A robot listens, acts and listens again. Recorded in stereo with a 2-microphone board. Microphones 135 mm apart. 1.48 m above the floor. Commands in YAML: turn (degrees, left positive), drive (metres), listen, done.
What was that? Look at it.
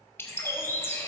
turn: 20
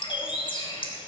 turn: 145
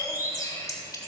turn: 25
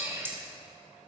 turn: -15
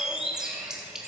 done: "Facing the bird, 1 to 2 m away."